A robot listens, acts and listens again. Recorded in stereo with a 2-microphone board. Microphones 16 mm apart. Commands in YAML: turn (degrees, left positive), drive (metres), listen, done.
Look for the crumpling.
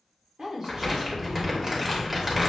turn: -20
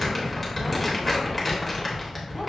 done: "Found it: crumpling, straight ahead."